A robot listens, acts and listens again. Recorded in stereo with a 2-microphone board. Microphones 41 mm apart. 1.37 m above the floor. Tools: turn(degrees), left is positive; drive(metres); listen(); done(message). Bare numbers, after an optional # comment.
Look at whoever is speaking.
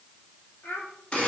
turn(90)
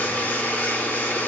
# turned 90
listen()
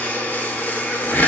listen()
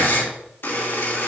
done("I heard a child speaking from this way, but can't make it out now.")